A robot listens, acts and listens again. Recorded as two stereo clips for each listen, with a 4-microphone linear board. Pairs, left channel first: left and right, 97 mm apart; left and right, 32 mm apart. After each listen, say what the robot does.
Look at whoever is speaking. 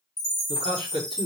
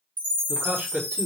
Turn 70° right.
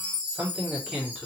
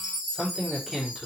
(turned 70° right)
Facing the man speaking.